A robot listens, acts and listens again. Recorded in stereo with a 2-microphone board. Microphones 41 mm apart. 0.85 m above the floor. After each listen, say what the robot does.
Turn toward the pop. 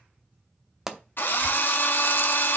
Turn 30° right.
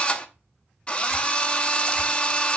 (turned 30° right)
Keep listening.
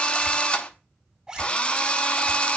I heard a pop, but can't make it out now. It was about 20° left or 140° right.